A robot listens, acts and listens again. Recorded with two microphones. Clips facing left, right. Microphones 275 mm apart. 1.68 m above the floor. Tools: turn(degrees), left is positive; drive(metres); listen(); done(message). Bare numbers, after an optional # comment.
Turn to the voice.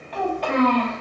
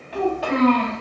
turn(30)
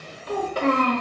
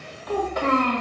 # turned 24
# So it is at 140° left.
turn(140)
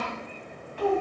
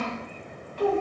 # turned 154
# The child speaking is now 45° right.
turn(-45)
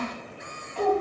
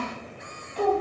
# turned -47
# The child speaking is now 15° right.
turn(-15)
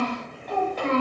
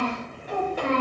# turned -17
# The child speaking is now 10° right.
turn(-10)
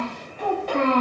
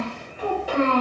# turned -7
done("Found it: a child speaking, straight ahead.")